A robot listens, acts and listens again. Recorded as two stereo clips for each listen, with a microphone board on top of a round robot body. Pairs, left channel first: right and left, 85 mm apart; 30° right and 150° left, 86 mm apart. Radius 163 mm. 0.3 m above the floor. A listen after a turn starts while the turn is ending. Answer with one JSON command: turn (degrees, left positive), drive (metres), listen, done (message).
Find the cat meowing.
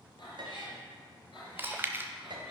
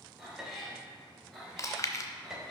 {"turn": -115}
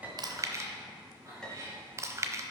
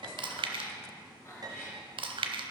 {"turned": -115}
{"turn": 35}
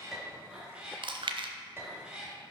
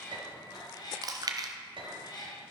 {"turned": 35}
{"turn": 10}
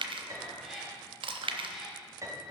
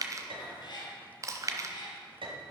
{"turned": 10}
{"done": "Found it: a cat meowing, straight ahead, 2 to 4 m away."}